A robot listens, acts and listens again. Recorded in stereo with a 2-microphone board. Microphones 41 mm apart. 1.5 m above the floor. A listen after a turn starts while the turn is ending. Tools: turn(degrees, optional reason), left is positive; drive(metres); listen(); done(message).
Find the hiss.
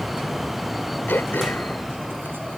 listen()
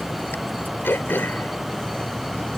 listen()
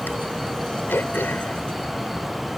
done("I can't make out a hiss, only throat clearing.")